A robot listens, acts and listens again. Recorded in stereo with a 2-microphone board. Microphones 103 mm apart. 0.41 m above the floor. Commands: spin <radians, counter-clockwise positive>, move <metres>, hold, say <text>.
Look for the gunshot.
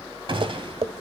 spin -0.96
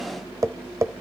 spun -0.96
hold
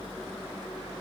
say I heard a gunshot, but can't make it out now. It was about straight ahead or 70° right.